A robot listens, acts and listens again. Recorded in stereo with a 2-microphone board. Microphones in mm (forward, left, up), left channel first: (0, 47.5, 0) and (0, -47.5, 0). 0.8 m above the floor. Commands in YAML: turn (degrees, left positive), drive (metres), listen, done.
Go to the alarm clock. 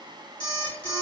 turn: 60
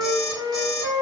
drive: 1.0
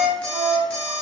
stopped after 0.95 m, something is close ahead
turn: 10
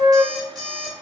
done: "Arrived at the alarm clock, straight ahead."